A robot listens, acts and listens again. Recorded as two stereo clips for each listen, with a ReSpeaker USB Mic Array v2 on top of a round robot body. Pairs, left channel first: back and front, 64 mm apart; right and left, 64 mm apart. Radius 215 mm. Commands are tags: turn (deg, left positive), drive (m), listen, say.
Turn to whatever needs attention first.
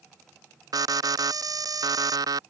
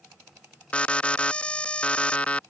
<turn deg="-15"/>
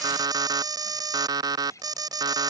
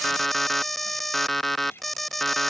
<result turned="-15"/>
<say>Facing the alarm.</say>